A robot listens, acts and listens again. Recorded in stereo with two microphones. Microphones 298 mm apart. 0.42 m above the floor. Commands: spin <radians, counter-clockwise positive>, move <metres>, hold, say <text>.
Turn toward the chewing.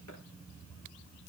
hold
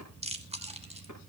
spin -0.35
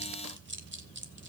spin -2.44
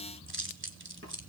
spin -0.70
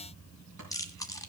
spin 0.17
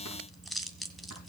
say Found it: chewing, straight ahead, 1 to 2 m away.